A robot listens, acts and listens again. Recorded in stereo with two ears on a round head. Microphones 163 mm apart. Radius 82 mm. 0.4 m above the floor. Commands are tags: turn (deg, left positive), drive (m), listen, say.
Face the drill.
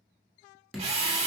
<turn deg="-35"/>
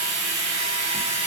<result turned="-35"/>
<turn deg="-110"/>
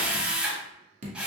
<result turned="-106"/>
<say>Facing the drill, under 1 m away.</say>